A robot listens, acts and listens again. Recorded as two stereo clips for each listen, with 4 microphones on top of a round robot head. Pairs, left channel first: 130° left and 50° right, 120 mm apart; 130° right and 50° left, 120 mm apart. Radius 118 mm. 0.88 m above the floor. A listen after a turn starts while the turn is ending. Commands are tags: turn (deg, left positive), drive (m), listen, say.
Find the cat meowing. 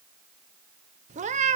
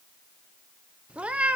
<turn deg="-30"/>
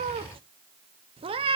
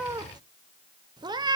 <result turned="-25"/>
<say>Facing the cat meowing.</say>